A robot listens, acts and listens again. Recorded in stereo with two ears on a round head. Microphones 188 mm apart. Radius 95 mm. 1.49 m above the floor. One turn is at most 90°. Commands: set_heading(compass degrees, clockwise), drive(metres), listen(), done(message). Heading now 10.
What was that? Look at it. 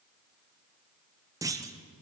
set_heading(25)
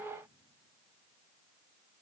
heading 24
listen()
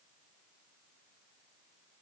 done("I heard a clunk, but can't make it out now. It was about straight ahead or 150° right.")